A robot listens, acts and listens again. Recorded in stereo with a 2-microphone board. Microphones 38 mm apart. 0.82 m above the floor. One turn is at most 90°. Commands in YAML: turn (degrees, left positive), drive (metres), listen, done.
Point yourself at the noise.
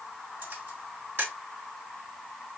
turn: -65
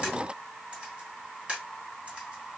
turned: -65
turn: -30
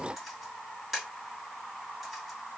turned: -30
done: "Found it: a camera shutter, straight ahead."